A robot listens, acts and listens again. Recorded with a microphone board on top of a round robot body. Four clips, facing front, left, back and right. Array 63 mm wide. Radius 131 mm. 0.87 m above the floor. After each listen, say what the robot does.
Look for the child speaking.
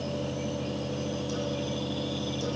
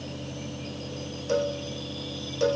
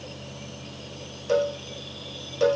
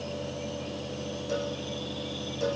Keep listening.
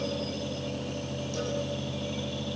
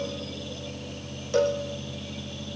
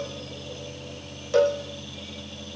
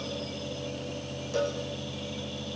Keep listening.
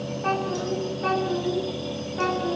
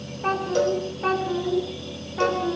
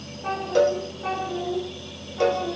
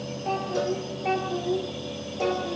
Turn 70° left.
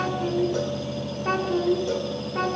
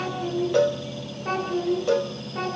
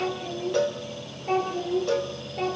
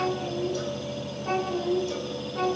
Turn 15° left.
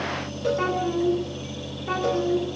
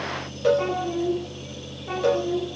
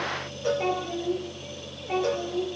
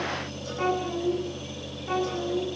Found it: a child speaking, straight ahead, over 4 m away.